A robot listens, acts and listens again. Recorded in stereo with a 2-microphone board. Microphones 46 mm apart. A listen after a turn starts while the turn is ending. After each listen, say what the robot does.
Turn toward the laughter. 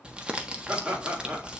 Turn 30° right.
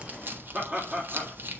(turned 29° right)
Turn 10° right.
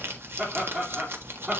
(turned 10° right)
Turn 15° right.
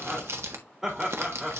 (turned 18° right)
Turn 15° right.
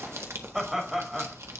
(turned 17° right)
Facing the laughter.